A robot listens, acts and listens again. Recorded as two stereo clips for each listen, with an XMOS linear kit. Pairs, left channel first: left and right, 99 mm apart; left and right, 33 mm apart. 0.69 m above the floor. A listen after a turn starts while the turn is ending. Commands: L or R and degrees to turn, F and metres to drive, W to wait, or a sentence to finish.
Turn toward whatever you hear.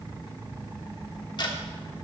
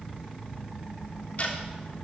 L50
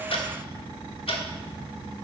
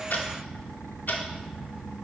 L80
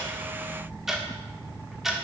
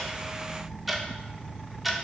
Facing the ticking, 1 to 2 m away.